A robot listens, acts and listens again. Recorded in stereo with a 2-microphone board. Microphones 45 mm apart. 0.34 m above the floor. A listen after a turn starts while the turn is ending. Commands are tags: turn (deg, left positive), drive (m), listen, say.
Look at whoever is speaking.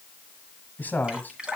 <turn deg="40"/>
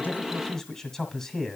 <turn deg="10"/>
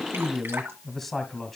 <say>Facing the man speaking, 1 to 2 m away.</say>